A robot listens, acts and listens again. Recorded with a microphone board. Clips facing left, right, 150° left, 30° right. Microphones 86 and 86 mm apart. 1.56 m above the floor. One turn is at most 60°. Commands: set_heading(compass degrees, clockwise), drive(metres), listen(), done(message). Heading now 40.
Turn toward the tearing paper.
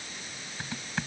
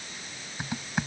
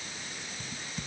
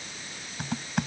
listen()
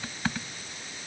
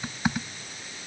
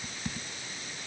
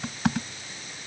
listen()
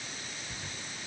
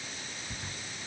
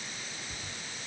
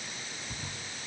done("I can't make out tearing paper, only typing on a keyboard.")